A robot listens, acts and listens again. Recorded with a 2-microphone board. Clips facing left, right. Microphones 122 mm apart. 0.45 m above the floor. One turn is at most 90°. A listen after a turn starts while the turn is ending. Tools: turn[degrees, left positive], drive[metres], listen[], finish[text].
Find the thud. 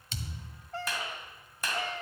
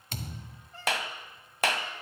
Thought: The thud: about 50° right or 130° right.
Action: turn[-50]
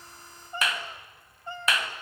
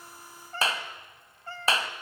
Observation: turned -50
Action: listen[]
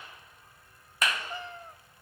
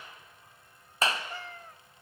Action: finish[I heard a thud, but can't make it out now. It was about straight ahead or 80° right.]